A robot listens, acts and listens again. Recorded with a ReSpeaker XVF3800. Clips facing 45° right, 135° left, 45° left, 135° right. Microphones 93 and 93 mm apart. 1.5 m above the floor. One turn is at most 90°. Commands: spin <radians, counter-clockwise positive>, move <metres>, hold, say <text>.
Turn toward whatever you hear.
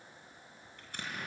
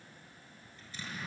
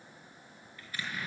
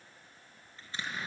spin -1.22
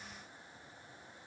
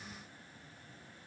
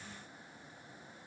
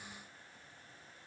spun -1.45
spin 0.17
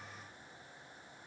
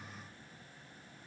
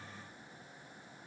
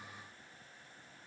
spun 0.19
say I heard an explosion from this way, but can't make it out now.